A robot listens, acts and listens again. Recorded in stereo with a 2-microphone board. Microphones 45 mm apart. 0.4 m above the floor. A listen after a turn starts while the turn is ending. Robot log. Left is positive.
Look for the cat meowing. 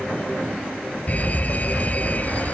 cmd idle
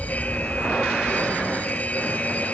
cmd idle
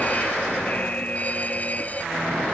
end: I can't make out a cat meowing to turn to.